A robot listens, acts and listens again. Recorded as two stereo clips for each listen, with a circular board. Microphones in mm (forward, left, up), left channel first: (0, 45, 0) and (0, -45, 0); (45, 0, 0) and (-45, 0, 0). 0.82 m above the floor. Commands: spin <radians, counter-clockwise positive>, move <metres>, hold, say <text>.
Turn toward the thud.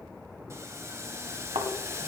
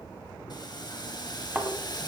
spin -1.83
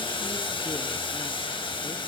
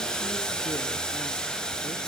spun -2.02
spin 0.17
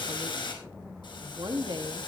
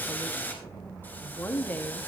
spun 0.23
say Facing where the thud came from. I can't hear it now.